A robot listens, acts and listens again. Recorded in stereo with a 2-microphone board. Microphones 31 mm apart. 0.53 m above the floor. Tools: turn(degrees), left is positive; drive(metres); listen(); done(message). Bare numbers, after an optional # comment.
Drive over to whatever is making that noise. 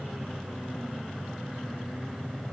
listen()
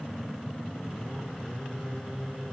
listen()
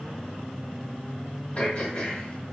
# The throat clearing: about 40° left or 140° left.
turn(40)
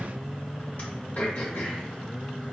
# So it is at 95° left.
turn(95)
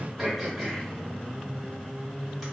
# The throat clearing is now 10° right.
turn(-10)
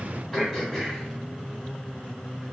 drive(1.0)
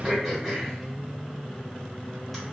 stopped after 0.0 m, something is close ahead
done("Something is in my way. I am facing the throat clearing but have not reached it.")